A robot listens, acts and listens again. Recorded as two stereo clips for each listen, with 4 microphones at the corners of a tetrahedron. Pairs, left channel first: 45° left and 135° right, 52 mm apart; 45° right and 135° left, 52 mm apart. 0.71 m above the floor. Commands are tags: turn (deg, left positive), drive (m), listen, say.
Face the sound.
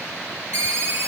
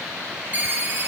<turn deg="-170"/>
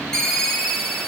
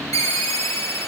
<turn deg="-40"/>
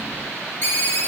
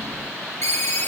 <say>Found it: a ringtone, straight ahead.</say>